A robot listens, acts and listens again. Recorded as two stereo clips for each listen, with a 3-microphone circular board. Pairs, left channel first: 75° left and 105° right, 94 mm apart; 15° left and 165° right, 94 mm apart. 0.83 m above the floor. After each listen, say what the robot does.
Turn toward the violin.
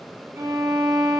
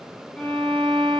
Turn 60° right.
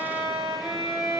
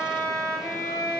Turn 35° right.
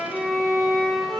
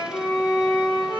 Turn 10° right.
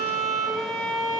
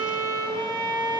Found it: a violin, straight ahead, 1 to 2 m away.